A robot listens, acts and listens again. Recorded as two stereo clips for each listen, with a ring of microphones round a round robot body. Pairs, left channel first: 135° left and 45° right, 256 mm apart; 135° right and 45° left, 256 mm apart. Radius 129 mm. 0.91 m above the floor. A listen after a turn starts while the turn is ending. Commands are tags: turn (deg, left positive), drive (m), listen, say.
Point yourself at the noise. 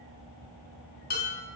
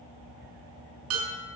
<turn deg="80"/>
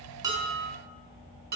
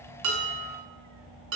<say>Found it: dishes clattering, straight ahead, over 4 m away.</say>